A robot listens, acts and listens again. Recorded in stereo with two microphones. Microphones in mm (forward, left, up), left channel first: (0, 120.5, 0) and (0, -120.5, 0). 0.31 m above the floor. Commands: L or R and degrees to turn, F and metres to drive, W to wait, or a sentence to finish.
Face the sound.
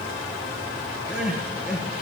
R30
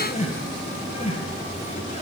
L25
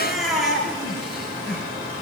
Found it: crying, straight ahead.